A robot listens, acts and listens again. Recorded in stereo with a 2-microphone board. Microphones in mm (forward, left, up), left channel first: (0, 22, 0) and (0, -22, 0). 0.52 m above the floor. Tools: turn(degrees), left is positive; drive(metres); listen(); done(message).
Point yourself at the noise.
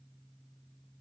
listen()
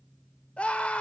turn(degrees=25)
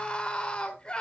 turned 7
turn(degrees=20)
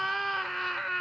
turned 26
done("Facing the scream, 2 to 4 m away.")